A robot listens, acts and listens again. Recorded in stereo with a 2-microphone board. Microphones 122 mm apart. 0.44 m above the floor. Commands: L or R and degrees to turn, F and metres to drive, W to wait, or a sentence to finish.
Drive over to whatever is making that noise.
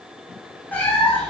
L30
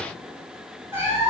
R15
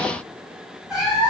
F1.0
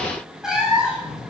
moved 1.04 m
F1.0
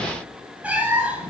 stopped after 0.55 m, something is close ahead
R10
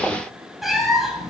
Arrived at the cat meowing, straight ahead.